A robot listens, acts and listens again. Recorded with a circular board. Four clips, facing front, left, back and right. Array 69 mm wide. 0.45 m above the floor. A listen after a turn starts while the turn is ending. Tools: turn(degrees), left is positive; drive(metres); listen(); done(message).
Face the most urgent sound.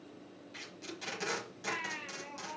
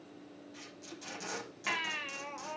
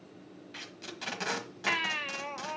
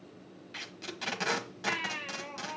turn(degrees=175)
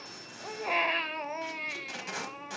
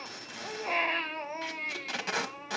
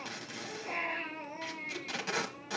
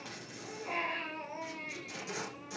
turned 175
turn(degrees=35)
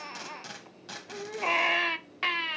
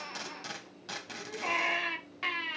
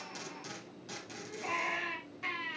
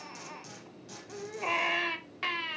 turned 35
done("Found it: a baby crying, straight ahead.")